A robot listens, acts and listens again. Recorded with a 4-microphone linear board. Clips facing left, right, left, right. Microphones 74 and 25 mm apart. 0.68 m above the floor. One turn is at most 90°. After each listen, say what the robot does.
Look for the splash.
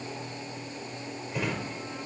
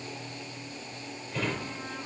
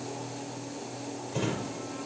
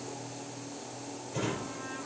Keep listening.
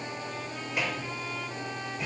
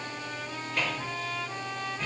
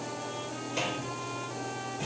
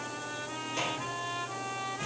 Keep listening.
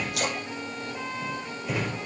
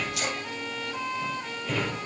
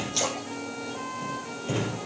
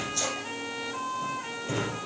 Turn 55° left.
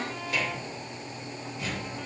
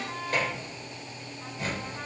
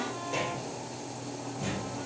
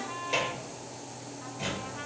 Keep listening.
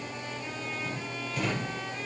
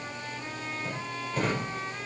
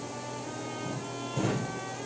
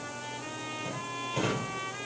I heard a splash, but can't make it out now. It was about straight ahead or 70° left.